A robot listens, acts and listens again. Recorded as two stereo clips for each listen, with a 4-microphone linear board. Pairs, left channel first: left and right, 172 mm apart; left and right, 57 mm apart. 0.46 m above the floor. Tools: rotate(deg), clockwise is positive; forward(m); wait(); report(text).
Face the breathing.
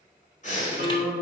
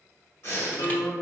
rotate(-45)
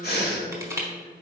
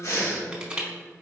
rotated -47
rotate(-85)
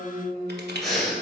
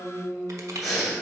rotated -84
report("Facing the breathing, 1 to 2 m away.")